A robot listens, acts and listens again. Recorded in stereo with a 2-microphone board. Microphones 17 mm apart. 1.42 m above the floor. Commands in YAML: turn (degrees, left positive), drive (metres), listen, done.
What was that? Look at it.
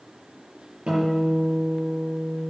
turn: -75
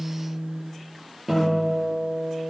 done: "Facing the guitar, over 4 m away."